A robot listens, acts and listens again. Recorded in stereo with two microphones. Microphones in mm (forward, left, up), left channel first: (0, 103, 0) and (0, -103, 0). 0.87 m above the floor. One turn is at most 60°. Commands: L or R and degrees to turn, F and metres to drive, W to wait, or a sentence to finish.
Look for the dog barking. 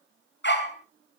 L60
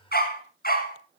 L45
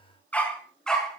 Found it: a dog barking, straight ahead.